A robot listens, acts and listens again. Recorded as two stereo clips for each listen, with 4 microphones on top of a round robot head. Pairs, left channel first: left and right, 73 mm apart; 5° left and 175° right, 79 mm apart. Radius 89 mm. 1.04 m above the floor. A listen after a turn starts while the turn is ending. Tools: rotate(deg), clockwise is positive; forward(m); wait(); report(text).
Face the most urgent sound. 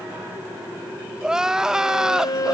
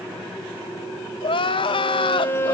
rotate(10)
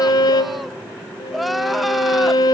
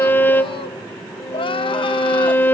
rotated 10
report("Found it: crying, straight ahead.")